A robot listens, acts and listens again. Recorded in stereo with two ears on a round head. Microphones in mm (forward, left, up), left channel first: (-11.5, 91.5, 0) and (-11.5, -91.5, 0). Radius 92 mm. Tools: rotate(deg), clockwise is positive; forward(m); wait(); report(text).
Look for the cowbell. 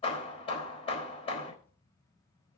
wait()
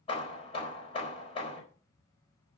wait()
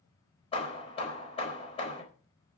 report("I can't make out a cowbell to turn to.")